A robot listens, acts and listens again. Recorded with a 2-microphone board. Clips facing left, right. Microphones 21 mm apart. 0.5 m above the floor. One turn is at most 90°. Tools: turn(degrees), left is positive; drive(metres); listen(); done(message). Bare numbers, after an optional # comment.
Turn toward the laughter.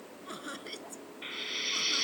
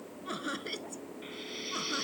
turn(-30)
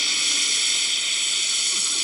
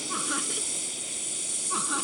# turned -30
listen()
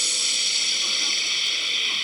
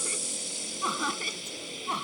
listen()
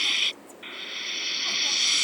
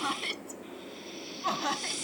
done("I heard laughter, but can't make it out now. It was about 15° left or 135° right.")